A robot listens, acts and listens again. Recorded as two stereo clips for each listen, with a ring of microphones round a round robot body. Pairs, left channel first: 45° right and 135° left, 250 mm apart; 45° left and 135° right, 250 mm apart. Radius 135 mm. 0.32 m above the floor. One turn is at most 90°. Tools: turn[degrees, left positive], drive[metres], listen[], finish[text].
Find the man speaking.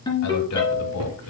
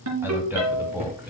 Thought: The man speaking: 55° right.
Action: turn[-55]
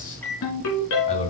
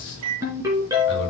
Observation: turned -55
Thought: The man speaking is now 15° left.
Action: turn[15]
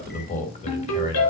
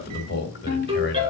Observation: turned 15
Thought: The man speaking is now 15° left.
Action: turn[15]
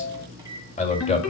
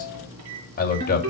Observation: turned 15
Thought: The man speaking is now 10° left.
Action: turn[10]
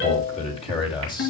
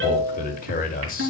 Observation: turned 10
Thought: The man speaking is now 15° left.
Action: turn[15]
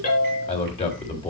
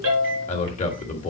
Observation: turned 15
Action: finish[Facing the man speaking, 1 to 2 m away.]